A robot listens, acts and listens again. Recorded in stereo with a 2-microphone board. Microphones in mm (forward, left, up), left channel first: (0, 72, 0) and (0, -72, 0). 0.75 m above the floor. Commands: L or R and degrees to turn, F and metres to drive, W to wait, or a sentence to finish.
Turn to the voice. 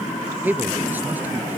R30
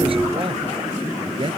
R140
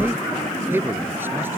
R15
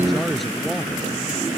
Facing the man speaking.